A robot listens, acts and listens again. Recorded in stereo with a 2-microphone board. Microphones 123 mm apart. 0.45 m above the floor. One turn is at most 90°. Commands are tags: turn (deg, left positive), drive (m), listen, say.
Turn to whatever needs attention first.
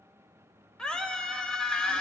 <turn deg="30"/>
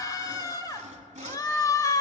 <turn deg="90"/>
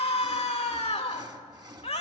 <turn deg="80"/>
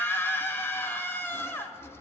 <turn deg="20"/>
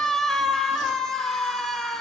<say>Facing the scream.</say>